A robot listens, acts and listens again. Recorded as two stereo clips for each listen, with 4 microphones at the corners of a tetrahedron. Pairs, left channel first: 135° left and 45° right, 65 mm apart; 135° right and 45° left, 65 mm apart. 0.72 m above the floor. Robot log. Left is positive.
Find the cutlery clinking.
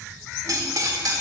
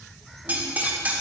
note: The cutlery clinking: 20° right.
cmd yaw -20
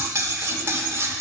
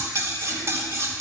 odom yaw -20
end: Facing the cutlery clinking.